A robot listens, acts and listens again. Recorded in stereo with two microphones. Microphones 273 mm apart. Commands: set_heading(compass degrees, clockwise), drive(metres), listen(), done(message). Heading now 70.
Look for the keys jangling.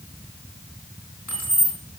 set_heading(355)
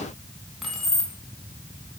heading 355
done("Found it: keys jangling, straight ahead, 2 to 4 m away.")